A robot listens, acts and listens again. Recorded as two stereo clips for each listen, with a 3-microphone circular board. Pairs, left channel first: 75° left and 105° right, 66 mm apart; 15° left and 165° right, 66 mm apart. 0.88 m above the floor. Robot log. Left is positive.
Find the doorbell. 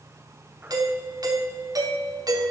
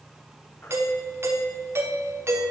note: The doorbell: 115° right.
cmd yaw -115
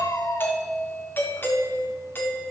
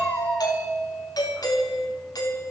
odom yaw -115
note: The doorbell is now 20° left.
cmd yaw +20
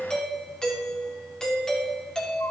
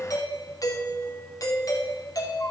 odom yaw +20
end: Found it: a doorbell, straight ahead, 2 to 4 m away.